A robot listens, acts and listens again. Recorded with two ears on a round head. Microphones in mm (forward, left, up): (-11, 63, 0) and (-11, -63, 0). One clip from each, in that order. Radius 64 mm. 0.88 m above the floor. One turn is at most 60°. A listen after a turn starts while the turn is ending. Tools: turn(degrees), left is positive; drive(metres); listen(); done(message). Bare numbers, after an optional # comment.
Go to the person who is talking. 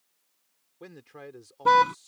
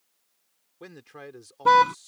# The man speaking: about 15° right or 165° right.
turn(-15)
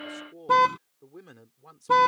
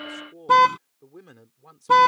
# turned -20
drive(1.0)
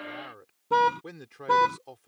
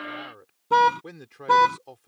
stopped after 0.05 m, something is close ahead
done("Blocked. The man speaking is further on, straight ahead.")